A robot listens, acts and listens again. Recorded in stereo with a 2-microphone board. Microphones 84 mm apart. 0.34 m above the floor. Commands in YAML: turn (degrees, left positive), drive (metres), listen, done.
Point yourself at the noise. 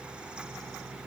listen: true
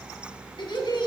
turn: 65
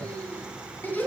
turn: 20
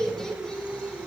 turn: 10
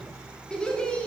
turn: 15
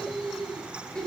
turn: 10
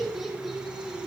done: "Facing the laughter."